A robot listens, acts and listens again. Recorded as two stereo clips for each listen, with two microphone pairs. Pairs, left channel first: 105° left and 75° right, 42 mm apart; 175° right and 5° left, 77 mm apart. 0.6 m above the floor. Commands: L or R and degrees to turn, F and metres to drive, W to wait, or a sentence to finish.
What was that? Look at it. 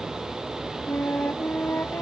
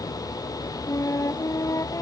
L135
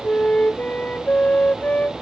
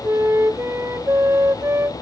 L55
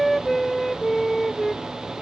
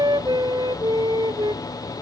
L20
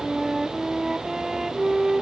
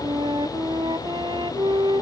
L10
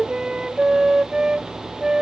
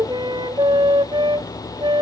Found it: a flute, straight ahead.